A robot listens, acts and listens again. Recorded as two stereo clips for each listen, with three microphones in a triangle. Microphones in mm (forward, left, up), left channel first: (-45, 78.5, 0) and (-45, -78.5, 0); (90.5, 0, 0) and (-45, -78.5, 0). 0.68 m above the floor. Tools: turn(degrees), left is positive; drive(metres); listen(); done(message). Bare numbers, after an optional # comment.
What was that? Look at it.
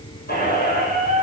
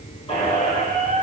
# The squeak: 80° left.
turn(80)
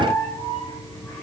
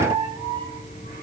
done("Facing the squeak, over 4 m away.")